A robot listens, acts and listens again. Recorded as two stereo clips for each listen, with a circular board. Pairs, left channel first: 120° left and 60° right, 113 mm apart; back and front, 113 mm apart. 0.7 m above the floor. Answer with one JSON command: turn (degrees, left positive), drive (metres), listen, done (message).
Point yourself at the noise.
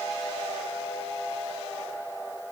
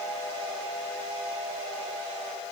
{"listen": true}
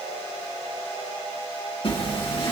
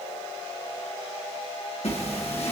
{"turn": 160}
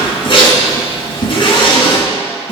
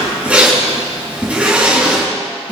{"turn": 75}
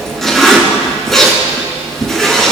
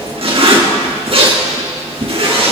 {"turn": 30}
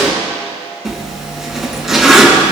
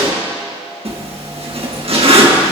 {"turn": 25}
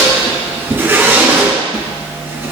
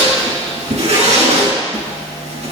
{"turn": 10}
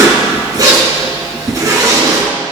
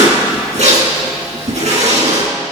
{"done": "Facing the zipper."}